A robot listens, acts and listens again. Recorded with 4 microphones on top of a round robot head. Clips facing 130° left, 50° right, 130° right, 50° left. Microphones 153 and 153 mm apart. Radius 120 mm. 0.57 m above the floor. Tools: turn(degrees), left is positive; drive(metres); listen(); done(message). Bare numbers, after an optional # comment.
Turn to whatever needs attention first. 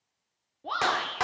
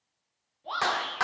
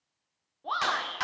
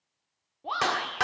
# The shout: 125° left.
turn(125)
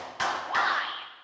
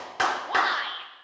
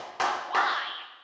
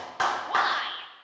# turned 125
done("Found it: a shout, straight ahead, 1 to 2 m away.")